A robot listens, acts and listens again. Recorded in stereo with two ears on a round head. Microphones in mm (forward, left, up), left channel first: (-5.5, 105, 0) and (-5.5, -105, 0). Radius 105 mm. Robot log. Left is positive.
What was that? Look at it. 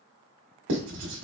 note: The writing: about 55° right or 125° right.
cmd yaw -55
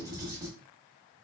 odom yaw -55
note: So it is at 20° right.
cmd yaw -20
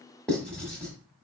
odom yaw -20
end: Found it: writing, straight ahead.